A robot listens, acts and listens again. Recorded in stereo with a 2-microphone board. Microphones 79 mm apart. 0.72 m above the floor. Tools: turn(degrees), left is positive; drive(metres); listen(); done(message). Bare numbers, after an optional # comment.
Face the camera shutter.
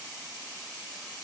listen()
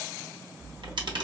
turn(-90)
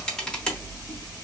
# So it is at 10° left.
turn(10)
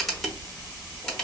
done("Facing the camera shutter, under 1 m away.")